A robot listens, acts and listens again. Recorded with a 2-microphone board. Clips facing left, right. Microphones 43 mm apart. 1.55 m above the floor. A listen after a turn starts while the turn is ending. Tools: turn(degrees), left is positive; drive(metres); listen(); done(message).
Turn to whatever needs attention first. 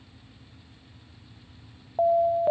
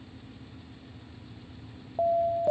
turn(degrees=30)
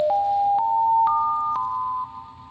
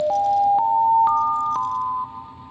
done("Facing the alarm.")